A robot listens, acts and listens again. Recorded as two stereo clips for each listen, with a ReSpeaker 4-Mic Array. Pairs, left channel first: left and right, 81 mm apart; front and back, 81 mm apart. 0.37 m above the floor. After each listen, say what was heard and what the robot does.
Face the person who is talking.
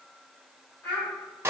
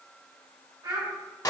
The child speaking: 160° left. Turn 160° left.
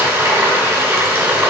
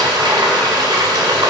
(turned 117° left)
Nothing new. It was at 45° left. Turn 45° left.
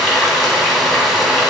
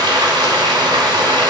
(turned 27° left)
Nothing new. It was at 15° left. Turn 15° left.
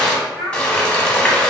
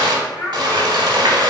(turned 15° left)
Found it: a child speaking, straight ahead, 1 to 2 m away.